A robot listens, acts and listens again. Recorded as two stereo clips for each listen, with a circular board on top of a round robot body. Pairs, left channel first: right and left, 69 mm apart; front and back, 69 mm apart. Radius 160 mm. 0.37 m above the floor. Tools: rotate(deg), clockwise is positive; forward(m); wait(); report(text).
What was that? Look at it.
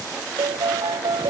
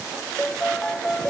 rotate(-80)
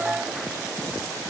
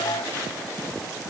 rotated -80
rotate(-20)
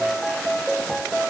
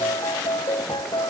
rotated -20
report("Found it: a piano, straight ahead.")